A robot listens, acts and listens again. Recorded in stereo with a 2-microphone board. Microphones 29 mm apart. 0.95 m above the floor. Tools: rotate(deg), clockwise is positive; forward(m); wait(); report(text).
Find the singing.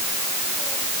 wait()
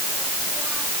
wait()
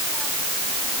report("I can't make out singing.")